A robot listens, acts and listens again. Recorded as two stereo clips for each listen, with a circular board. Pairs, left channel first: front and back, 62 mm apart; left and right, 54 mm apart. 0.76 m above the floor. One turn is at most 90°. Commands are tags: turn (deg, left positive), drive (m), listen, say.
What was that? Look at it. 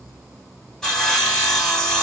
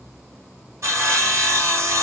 <turn deg="-80"/>
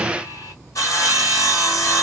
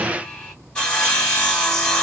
<turn deg="20"/>
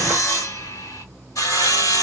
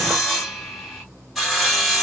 <say>Found it: sawing, straight ahead.</say>